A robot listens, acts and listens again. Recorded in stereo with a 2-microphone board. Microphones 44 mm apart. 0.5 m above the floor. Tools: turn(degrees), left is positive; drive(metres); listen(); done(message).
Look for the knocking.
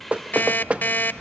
turn(degrees=-30)
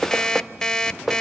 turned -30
done("Facing the knocking.")